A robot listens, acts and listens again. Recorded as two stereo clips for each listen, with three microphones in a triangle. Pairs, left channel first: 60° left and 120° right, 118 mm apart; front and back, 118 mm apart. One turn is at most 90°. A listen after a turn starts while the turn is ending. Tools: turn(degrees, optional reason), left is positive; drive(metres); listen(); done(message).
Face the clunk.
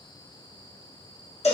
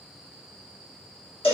listen()
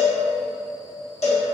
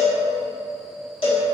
listen()
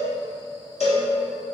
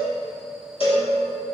done("I can't make out a clunk, only a cowbell.")